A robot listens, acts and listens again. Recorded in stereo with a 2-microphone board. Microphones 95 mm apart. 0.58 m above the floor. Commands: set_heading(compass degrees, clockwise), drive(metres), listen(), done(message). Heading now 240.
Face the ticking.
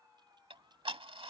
set_heading(315)
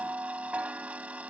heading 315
set_heading(330)
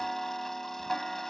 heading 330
done("Found it: ticking, straight ahead.")